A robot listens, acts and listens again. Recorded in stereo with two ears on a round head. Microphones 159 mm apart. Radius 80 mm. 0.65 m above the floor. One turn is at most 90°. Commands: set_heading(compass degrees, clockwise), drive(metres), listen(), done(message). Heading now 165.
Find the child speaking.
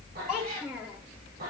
set_heading(195)
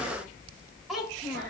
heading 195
set_heading(225)
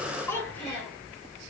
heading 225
set_heading(210)
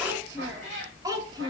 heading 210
set_heading(235)
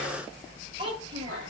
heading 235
set_heading(265)
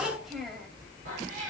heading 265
done("Facing the child speaking, 2 to 4 m away.")